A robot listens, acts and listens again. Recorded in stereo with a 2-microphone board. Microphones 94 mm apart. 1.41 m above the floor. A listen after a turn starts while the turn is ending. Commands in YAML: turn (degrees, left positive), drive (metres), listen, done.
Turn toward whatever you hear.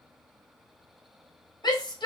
turn: 50
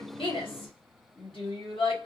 turn: 80
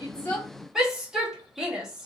done: "Found it: a shout, straight ahead, 1 to 2 m away."